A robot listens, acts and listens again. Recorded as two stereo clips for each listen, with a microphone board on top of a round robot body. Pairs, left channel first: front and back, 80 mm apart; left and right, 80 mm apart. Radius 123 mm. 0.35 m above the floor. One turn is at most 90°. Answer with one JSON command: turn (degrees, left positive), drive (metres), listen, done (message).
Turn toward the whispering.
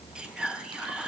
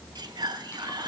{"turn": -90}
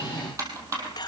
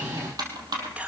{"turn": -15}
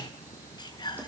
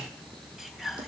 {"done": "Found it: whispering, straight ahead."}